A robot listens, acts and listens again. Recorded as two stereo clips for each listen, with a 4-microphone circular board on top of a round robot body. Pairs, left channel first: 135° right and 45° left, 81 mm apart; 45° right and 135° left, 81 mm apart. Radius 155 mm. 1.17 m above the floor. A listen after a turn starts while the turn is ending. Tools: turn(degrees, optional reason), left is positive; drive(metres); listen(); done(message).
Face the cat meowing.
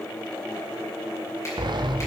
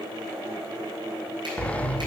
listen()
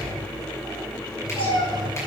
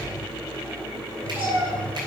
turn(degrees=-160, reason="The cat meowing: 160° right.")
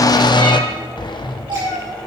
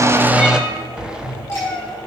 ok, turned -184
turn(degrees=15, reason="The cat meowing is now 15° left.")
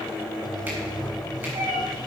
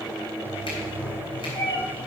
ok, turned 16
done("Facing the cat meowing, over 4 m away.")